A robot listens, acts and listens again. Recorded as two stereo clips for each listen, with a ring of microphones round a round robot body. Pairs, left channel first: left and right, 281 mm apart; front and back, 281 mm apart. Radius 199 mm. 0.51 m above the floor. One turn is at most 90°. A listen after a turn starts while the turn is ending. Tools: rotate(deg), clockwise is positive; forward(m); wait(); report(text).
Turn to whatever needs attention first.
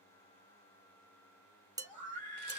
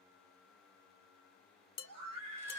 rotate(-90)
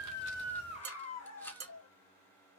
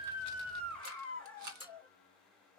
rotate(-85)
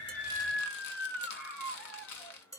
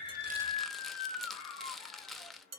report("Facing the scream, 2 to 4 m away.")